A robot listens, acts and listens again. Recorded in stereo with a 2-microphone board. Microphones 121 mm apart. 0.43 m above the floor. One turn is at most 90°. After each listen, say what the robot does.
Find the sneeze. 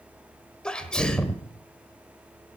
Turn 30° left.
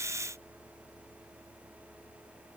Keep listening.
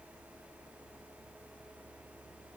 I heard a sneeze, but can't make it out now. It was about 25° right or 145° left.